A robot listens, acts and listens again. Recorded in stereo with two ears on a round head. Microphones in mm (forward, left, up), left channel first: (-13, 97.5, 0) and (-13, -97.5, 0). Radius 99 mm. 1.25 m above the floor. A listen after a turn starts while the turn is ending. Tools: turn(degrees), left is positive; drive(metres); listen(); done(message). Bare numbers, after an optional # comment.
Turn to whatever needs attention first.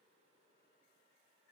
listen()
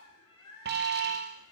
# The alarm: about 50° right or 130° right.
turn(-50)
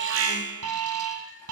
# So it is at 75° right.
turn(-75)
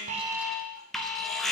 done("Facing the alarm.")